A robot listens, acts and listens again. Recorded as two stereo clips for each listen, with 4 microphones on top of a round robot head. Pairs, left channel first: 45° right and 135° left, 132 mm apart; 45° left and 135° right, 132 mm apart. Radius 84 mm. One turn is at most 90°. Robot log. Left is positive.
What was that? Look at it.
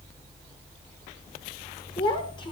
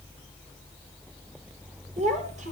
note: The child speaking: 95° right.
cmd yaw -90
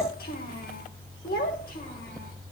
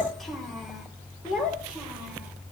note: The child speaking is now 55° right.
cmd yaw -55
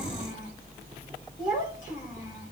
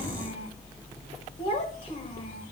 note: The child speaking is now 10° right.
cmd yaw -10
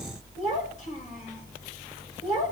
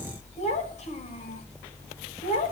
end: Found it: a child speaking, straight ahead, over 4 m away.